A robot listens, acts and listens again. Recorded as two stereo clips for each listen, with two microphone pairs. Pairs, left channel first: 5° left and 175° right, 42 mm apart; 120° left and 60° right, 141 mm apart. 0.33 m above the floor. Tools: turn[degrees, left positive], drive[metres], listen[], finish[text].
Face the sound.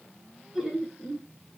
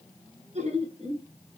Thought: The laughter: 100° right.
Action: turn[-100]
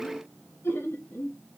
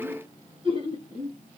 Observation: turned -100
Thought: The laughter is now 15° right.
Action: turn[-15]
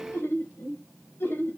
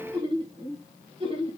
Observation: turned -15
Thought: The laughter is now 15° right.
Action: turn[-15]
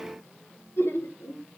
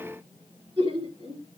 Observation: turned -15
Thought: The laughter is now 10° right.
Action: turn[-10]
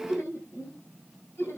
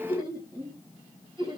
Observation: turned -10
Action: finish[Found it: laughter, straight ahead.]